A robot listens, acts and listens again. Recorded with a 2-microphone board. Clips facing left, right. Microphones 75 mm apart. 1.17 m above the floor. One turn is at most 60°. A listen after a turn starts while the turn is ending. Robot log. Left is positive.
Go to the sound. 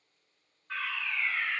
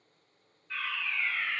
note: The fire alarm: about 60° left or 120° left.
cmd yaw +60
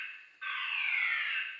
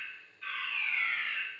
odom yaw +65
note: So it is at 50° left.
cmd yaw +50
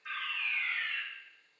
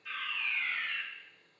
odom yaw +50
cmd fwd 1.0
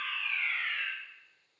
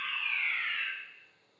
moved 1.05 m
cmd fwd 1.0
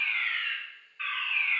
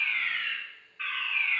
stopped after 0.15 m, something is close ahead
end: Arrived at the fire alarm, straight ahead.